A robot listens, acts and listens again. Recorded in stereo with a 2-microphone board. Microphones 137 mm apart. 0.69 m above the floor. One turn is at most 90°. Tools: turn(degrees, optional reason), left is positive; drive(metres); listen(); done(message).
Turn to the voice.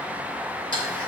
listen()
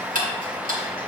listen()
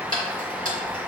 done("I can't make out anyone speaking to turn to.")